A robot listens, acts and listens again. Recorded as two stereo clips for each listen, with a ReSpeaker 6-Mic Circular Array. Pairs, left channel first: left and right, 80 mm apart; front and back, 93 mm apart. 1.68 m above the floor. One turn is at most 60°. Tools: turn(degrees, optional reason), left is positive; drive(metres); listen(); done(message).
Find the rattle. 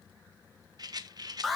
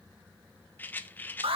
turn(degrees=-60, reason="The rattle: 65° right.")
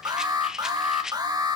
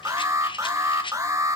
turn(degrees=-10, reason="The rattle is now 10° right.")
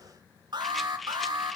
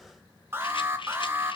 done("Facing the rattle.")